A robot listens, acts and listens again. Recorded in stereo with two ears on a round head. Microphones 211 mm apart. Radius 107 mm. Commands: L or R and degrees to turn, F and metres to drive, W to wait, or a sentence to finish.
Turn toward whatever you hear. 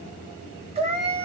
R30
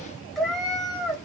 Found it: a cat meowing, straight ahead.